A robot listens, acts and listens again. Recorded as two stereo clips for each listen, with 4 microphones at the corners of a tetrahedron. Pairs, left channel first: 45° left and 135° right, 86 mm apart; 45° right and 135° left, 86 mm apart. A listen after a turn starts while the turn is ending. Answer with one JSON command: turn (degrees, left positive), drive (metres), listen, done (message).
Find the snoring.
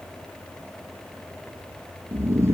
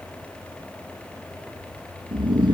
{"turn": 165}
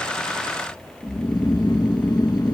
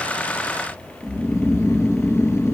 {"turn": 10}
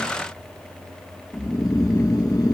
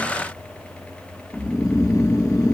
{"done": "Facing the snoring."}